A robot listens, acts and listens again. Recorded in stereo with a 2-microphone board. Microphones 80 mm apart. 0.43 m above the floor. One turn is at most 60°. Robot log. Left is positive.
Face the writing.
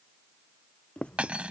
cmd yaw +30
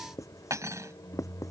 note: So it is at 135° left.
cmd yaw +60
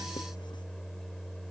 note: Nothing new. It was at 75° left.
cmd yaw +60
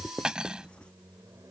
note: The writing is now 10° left.
cmd yaw +10
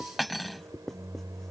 end: Facing the writing.